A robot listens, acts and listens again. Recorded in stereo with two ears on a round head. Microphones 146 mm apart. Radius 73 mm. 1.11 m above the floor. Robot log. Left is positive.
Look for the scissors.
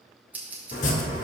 cmd yaw -30
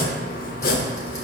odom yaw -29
cmd idle
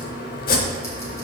cmd idle
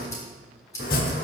note: So it is at 20° left.
cmd yaw +20
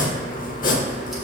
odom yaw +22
cmd idle
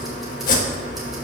cmd idle
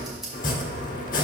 end: I heard scissors from this way, but can't make it out now.